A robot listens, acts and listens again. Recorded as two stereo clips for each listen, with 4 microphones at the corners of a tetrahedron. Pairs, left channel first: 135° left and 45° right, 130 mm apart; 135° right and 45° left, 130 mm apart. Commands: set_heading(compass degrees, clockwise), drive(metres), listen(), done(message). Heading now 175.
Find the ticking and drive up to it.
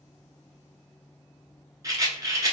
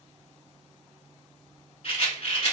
listen()
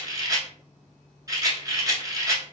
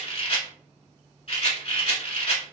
listen()
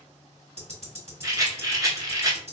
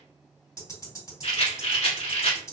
set_heading(245)
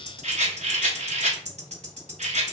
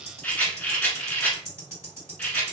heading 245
set_heading(270)
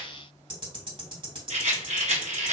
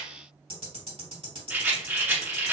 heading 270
drive(1.0)
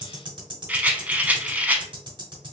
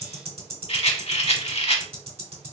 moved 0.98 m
drive(1.0)
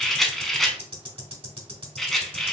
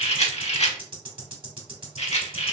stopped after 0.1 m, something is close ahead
done("Arrived at the ticking, straight ahead.")